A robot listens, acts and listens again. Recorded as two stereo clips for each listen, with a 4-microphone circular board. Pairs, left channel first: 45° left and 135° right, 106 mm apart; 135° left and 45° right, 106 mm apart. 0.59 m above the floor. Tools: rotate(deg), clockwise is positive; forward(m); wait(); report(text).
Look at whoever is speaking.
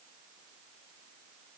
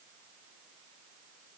wait()
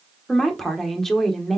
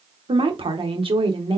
rotate(40)
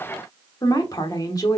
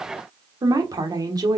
report("Found it: a woman speaking, straight ahead.")